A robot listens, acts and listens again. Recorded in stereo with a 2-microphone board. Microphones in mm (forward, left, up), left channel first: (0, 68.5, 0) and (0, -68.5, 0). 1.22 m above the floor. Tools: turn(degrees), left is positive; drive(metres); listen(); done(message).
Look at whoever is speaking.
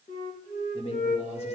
turn(degrees=50)
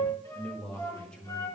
turn(degrees=10)
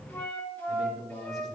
done("Facing the man speaking.")